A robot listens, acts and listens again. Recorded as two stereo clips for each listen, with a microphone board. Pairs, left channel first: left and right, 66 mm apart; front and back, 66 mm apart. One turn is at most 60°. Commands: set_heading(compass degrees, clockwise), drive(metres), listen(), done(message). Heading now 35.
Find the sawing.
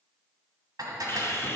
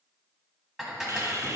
set_heading(335)
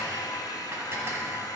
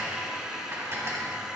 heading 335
set_heading(275)
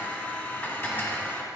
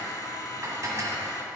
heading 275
set_heading(250)
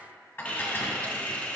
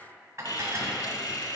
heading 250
set_heading(230)
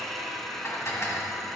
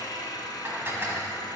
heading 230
done("Facing the sawing.")